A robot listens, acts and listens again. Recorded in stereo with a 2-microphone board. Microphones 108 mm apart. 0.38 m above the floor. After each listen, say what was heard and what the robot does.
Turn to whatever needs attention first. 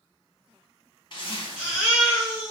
Turn 30° right.
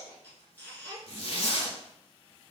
Keep listening.
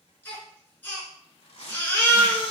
So it is at 20° left. Turn 20° left.
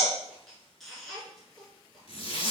Found it: a baby crying, straight ahead, 1 to 2 m away.